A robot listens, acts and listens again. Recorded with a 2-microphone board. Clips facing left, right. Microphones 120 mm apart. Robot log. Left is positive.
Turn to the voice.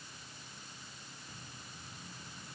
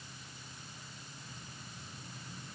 cmd idle
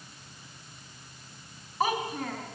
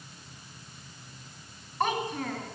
cmd yaw +30
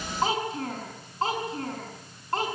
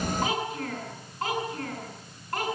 note: So it is at 150° left.
cmd yaw +150
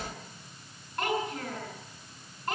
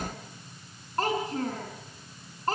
note: The child speaking is now 35° right.
cmd yaw -35
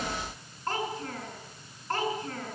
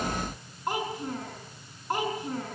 note: The child speaking is now 15° right.
cmd yaw -15
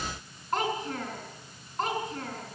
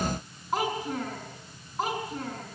end: Facing the child speaking.